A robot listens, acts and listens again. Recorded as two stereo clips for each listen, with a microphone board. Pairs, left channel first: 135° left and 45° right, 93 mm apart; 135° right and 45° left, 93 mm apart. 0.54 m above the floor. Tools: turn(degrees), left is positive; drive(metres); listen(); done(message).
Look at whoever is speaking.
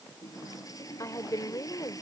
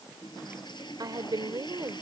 turn(degrees=85)
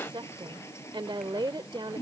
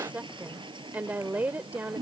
turn(degrees=-25)
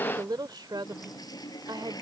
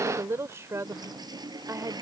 turn(degrees=-10)
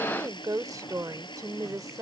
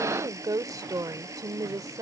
done("Found it: a woman speaking, straight ahead.")